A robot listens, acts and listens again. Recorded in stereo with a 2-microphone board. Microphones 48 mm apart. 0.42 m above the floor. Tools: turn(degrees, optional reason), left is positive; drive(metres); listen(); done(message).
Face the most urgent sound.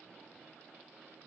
listen()
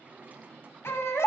turn(degrees=65, reason="The baby crying: about 65° left or 115° left.")
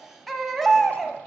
done("Found it: a baby crying, straight ahead, 1 to 2 m away.")